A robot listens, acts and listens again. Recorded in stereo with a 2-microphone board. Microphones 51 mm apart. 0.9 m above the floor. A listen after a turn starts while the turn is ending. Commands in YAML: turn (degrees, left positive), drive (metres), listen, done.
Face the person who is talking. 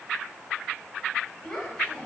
turn: 15
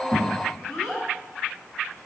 turn: 30
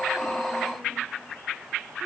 listen: true
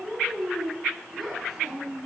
turn: -10
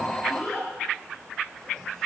done: "Facing the child speaking, over 4 m away."